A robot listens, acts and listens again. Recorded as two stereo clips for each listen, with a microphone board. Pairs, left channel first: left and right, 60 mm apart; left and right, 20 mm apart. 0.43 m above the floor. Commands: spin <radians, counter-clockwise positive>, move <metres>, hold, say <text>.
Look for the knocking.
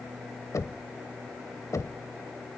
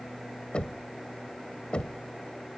spin 1.05
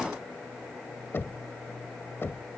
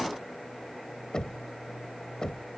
spin 0.70
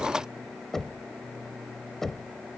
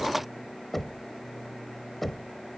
say Facing the knocking.